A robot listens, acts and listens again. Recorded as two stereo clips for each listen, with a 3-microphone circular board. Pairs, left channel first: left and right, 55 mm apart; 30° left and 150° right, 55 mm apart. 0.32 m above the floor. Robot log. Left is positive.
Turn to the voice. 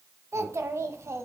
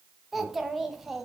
note: The child speaking: 65° right.
cmd yaw -65
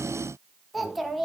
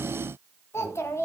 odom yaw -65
end: Found it: a child speaking, straight ahead, 1 to 2 m away.